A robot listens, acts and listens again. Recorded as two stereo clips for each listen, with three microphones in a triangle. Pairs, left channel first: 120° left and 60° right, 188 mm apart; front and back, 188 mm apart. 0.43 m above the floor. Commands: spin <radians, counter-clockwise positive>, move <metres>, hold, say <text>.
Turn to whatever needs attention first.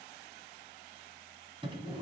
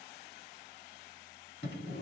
hold
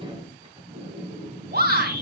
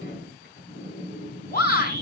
spin -0.61
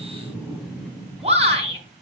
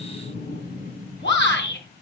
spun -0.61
say Facing the shout, over 4 m away.